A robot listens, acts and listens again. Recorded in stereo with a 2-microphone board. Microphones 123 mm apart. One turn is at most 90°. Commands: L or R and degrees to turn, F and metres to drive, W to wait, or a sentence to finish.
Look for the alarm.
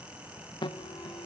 L35
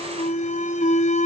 L90
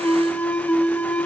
L10
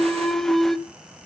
Found it: an alarm, straight ahead.